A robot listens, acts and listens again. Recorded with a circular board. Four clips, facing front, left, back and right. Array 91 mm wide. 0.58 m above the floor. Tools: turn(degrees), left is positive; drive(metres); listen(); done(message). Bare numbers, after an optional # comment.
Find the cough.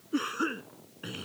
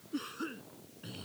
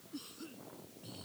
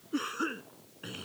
# The cough: 30° right.
turn(-30)
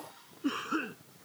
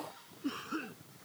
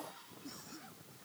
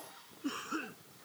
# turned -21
done("Facing the cough.")